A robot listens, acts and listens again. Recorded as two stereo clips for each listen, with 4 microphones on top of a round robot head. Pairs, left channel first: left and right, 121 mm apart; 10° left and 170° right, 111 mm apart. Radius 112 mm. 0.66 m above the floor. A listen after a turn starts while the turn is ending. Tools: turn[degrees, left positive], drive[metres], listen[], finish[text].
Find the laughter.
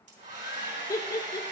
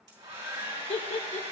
Thought: The laughter: 30° left.
Action: turn[30]
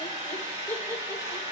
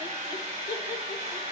Action: listen[]
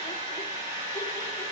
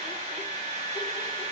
Action: listen[]
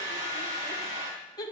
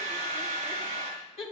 Thought: The laughter is now 35° left.
Action: turn[35]
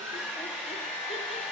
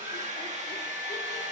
Action: listen[]
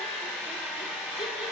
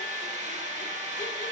Action: listen[]
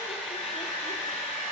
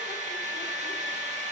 Action: finish[Facing where the laughter came from. I can't hear it now.]